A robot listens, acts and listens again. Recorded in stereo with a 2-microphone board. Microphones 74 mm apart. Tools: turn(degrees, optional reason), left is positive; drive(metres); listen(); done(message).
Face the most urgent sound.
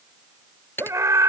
turn(degrees=-45, reason="The scream: about 45° right or 135° right.")
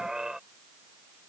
turn(degrees=-10, reason="So it is at 10° right.")
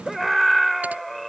done("Found it: a scream, straight ahead.")